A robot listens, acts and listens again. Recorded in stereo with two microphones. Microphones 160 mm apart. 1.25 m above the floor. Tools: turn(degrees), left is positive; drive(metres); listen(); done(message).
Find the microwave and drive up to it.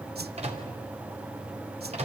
turn(degrees=-40)
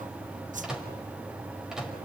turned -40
drive(metres=1.0)
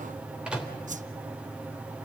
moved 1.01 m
drive(metres=1.0)
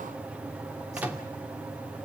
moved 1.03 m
turn(degrees=-10)
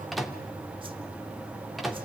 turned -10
drive(metres=1.0)
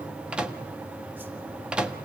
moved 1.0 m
drive(metres=1.0)
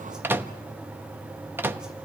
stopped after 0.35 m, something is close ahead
turn(degrees=-15)
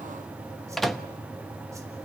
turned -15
done("I am next to the microwave.")